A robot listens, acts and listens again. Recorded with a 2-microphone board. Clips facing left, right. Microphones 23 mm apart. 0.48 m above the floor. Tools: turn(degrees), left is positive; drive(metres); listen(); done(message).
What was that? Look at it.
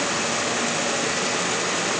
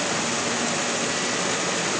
listen()
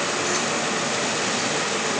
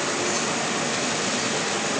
listen()
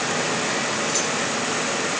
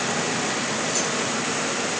done("I can't make out anything to turn to.")